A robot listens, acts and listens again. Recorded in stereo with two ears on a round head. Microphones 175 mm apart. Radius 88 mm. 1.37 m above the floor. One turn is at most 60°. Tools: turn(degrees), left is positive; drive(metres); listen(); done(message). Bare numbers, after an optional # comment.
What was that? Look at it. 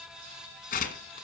# The tearing paper: about 45° left or 135° left.
turn(45)
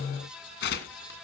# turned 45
# So it is at 80° left.
turn(60)
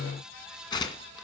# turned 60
# The tearing paper is now 25° left.
turn(25)
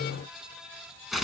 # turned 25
done("Found it: tearing paper, straight ahead, 2 to 4 m away.")